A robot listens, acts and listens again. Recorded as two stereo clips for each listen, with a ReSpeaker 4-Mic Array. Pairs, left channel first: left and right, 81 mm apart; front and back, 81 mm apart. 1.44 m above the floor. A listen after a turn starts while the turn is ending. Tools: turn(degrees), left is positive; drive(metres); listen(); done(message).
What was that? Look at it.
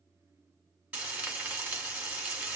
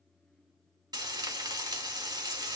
turn(degrees=-160)
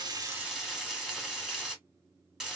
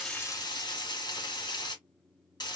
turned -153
turn(degrees=-10)
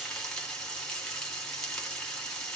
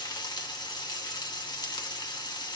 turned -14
done("Found it: frying, straight ahead, 1 to 2 m away.")